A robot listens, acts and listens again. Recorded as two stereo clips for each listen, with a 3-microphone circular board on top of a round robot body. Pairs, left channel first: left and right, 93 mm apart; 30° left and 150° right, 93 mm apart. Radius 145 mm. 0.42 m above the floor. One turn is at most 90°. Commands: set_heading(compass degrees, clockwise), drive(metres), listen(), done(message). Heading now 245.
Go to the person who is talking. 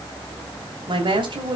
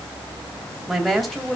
set_heading(305)
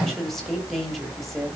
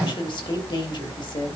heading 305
drive(1.0)
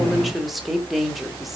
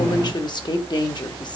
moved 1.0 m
drive(1.0)
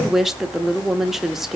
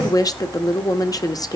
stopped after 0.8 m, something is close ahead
done("Arrived at the woman speaking, straight ahead.")